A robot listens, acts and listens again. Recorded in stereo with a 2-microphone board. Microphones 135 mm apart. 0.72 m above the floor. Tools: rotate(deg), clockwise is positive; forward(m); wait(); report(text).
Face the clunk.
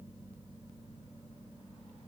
wait()
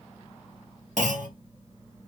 rotate(70)
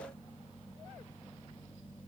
wait()
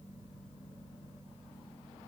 report("I heard a clunk, but can't make it out now. It was about straight ahead or 40° right.")